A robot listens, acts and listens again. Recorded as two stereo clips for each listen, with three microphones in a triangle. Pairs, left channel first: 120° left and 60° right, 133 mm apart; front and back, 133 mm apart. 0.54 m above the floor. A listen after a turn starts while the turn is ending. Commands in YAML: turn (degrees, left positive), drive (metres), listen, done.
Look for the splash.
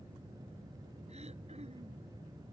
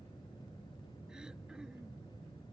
listen: true
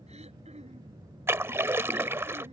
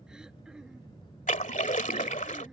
turn: 10
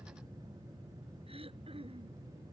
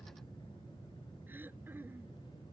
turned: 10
done: "Facing where the splash came from. I can't hear it now."